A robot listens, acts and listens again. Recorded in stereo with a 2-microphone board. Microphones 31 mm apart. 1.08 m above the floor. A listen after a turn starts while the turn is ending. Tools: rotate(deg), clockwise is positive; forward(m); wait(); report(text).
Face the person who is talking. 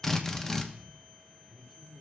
rotate(30)
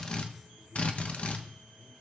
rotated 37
rotate(140)
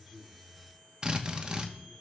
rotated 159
rotate(-20)
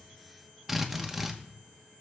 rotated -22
wait()
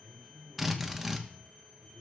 report("Facing the man speaking.")